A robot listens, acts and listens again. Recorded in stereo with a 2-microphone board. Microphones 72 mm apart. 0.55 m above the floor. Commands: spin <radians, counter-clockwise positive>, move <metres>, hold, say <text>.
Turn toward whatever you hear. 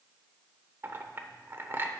spin -0.61
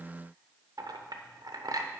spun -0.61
spin -1.83
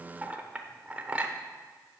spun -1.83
spin -0.35
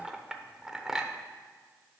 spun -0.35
say Facing the clink.